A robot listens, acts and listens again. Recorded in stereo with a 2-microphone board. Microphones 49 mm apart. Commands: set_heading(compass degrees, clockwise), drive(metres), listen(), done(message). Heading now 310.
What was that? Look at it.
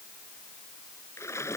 set_heading(220)
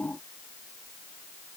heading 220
done("I heard a splash from this way, but can't make it out now.")